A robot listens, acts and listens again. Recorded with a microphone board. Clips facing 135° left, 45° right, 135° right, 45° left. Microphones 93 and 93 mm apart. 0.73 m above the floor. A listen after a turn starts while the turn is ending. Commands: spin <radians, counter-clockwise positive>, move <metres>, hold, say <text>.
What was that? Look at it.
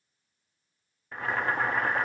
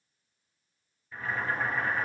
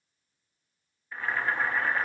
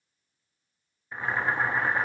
spin 2.01
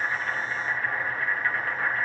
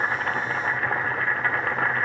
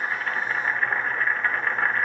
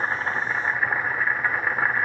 spin -0.61
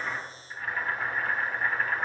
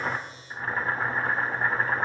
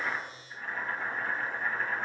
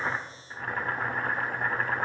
spin 0.26
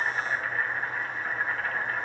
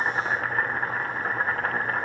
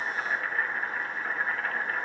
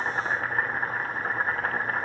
say Found it: boiling, straight ahead, under 1 m away.